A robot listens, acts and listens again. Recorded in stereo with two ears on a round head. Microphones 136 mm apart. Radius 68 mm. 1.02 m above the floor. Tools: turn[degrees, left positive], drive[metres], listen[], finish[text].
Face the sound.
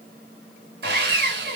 Thought: The sawing: about 70° right or 110° right.
Action: turn[-70]
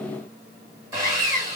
Thought: So it is at 20° right.
Action: turn[-20]
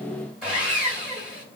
Action: finish[Facing the sawing, 1 to 2 m away.]